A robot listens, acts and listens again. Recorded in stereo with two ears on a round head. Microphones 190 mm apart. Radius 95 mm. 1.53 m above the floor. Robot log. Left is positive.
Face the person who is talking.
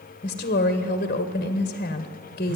note: The woman speaking: about 40° left or 140° left.
cmd yaw +40
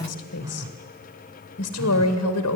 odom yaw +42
note: So it is at 100° left.
cmd yaw +100
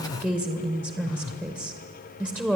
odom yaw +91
end: Found it: a woman speaking, straight ahead, 1 to 2 m away.